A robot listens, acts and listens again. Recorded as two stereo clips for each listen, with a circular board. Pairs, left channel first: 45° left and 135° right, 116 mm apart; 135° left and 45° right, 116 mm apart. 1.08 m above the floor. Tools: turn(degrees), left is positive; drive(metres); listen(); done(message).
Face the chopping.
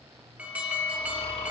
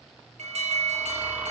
listen()
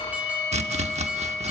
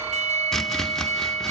turn(degrees=-140)
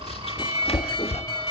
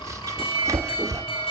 turn(degrees=15)
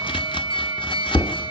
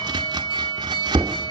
done("Facing the chopping.")